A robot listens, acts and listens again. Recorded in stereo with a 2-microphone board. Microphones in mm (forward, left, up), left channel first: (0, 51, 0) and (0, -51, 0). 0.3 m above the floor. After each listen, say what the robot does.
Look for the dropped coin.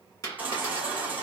Turn 40° left.
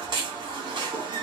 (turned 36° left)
Keep listening.
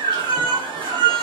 I heard a dropped coin, but can't make it out now. It was about straight ahead or 105° left.